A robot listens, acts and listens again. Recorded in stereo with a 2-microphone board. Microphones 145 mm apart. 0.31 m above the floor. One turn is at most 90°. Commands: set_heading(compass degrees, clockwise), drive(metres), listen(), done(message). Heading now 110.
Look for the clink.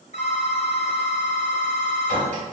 set_heading(165)
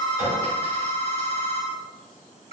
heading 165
set_heading(185)
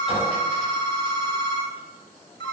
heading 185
listen()
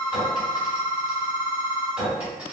set_heading(195)
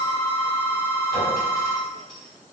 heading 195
listen()
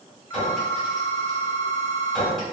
done("Facing the clink, 1 to 2 m away.")